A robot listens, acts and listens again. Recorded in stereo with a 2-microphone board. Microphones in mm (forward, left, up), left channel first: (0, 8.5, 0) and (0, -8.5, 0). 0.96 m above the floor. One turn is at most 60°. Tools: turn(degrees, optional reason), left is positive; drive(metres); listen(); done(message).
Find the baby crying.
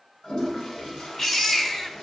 turn(degrees=40, reason="The baby crying: about 40° left or 140° left.")
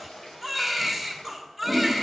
done("Facing the baby crying.")